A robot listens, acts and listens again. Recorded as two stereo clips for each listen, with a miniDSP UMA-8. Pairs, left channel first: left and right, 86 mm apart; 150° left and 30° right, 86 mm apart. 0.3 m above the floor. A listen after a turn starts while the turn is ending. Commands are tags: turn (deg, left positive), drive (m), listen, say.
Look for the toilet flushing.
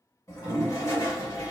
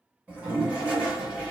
<turn deg="45"/>
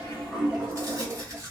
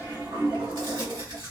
<turn deg="-15"/>
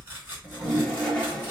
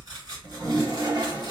<say>Facing the toilet flushing.</say>